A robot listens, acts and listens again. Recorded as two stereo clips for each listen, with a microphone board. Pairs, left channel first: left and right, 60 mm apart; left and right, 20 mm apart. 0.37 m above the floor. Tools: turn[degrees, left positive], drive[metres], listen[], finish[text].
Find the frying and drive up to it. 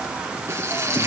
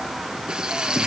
Thought: The frying: about 50° right or 130° right.
Action: turn[-50]
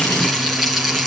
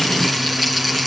Action: drive[1.0]
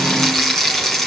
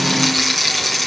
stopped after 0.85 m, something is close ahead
Action: finish[Blocked. The frying is further on, straight ahead.]